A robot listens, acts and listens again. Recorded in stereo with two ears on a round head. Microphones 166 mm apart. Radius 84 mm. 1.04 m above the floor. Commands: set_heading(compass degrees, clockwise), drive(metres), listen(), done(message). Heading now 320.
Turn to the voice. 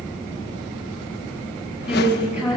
set_heading(350)
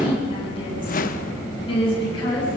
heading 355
set_heading(325)
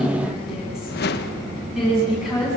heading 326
done("Facing the woman speaking, over 4 m away.")